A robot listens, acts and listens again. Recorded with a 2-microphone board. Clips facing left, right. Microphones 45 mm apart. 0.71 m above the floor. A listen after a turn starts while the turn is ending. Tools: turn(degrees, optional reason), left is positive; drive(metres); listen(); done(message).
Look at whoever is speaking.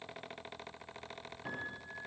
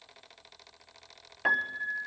listen()
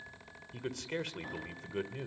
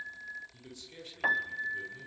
turn(degrees=70, reason="The man speaking: about 70° left or 110° left.")
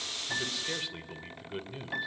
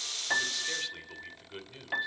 turn(degrees=10, reason="So it is at 10° left.")
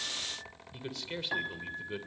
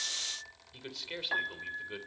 done("Found it: a man speaking, straight ahead.")